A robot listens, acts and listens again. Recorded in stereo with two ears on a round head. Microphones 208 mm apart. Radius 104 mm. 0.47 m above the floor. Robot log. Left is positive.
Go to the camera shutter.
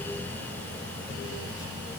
cmd idle
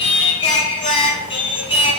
cmd idle
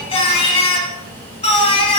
end: I can't make out a camera shutter, only singing.